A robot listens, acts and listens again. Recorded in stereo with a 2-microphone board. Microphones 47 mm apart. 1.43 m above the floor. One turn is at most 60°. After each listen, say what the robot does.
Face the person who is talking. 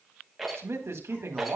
Turn 60° right.
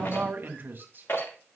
Turn 50° right.
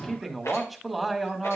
Facing the man speaking, 1 to 2 m away.